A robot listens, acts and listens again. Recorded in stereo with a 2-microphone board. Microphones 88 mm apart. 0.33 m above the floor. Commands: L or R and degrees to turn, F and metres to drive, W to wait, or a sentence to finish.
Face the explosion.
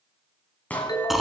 L15
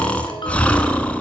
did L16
W
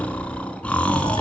I heard an explosion, but can't make it out now. It was about straight ahead or 145° left.